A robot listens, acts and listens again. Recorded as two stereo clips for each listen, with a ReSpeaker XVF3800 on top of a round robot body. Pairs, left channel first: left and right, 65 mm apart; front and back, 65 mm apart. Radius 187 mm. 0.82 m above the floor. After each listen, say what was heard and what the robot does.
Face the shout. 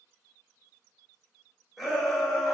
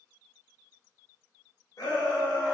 Found it: a shout, straight ahead, 2 to 4 m away.